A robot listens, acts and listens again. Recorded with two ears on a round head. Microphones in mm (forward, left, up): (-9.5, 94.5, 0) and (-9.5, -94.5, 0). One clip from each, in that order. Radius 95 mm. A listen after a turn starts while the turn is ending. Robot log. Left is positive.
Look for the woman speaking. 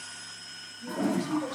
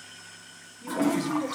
note: The woman speaking: about 20° right or 160° right.
cmd yaw -20
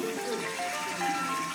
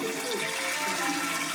cmd idle
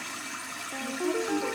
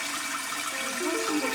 cmd idle
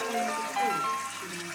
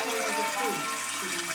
end: I heard a woman speaking, but can't make it out now. It was about straight ahead or 140° right.